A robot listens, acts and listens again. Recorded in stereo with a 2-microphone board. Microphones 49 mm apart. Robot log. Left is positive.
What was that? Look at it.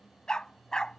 cmd yaw +30
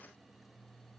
cmd idle
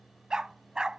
note: So it is at 15° right.
cmd yaw -15
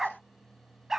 note: The dog barking is now 10° right.
cmd yaw -10
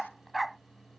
end: Facing the dog barking.